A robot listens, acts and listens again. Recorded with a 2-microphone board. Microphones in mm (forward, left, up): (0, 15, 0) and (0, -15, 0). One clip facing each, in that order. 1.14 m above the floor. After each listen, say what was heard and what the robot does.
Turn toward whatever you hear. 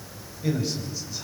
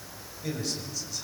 The man speaking: about 20° left or 160° left. Turn 20° left.
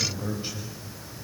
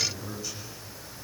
So it is at 140° left. Turn 140° left.
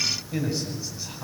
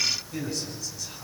The man speaking is now 20° left. Turn 20° left.
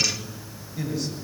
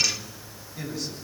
Found it: a man speaking, straight ahead.